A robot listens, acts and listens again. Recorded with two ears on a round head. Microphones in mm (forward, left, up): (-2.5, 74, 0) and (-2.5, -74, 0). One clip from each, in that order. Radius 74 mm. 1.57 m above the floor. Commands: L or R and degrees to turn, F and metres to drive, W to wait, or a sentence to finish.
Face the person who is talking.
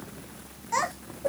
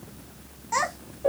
R30
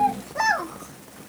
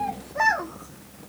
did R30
L20
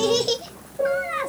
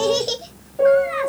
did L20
Found it: a child speaking, straight ahead, 1 to 2 m away.